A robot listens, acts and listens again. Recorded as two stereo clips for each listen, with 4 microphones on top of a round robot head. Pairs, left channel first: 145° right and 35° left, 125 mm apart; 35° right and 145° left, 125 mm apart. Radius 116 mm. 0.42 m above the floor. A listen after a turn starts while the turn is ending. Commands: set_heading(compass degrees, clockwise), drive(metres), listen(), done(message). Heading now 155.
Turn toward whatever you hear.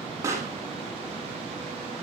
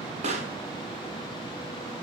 set_heading(50)
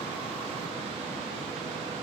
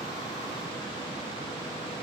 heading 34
set_heading(49)
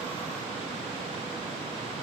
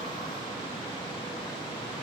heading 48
done("Facing where the pop came from. I can't hear it now.")